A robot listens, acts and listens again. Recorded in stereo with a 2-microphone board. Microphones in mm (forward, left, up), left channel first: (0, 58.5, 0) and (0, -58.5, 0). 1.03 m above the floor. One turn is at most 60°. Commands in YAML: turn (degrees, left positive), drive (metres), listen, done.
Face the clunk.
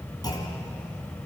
turn: 35
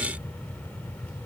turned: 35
listen: true
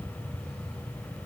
done: "I heard a clunk, but can't make it out now. It was about straight ahead or 110° left."